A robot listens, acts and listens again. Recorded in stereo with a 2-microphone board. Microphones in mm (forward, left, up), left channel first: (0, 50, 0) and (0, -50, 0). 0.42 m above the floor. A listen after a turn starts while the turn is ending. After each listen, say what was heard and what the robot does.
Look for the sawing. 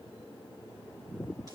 Keep listening.
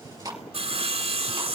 The sawing: about 70° right or 110° right. Turn 70° right.
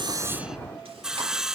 Found it: sawing, straight ahead.